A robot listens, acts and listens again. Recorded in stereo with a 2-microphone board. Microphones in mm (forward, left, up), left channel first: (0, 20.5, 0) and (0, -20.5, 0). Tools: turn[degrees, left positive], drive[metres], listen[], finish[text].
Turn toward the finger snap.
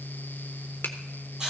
Thought: The finger snap: about 60° left or 120° left.
Action: turn[60]
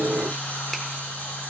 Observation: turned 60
Action: listen[]
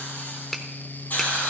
Action: finish[Facing the finger snap, 1 to 2 m away.]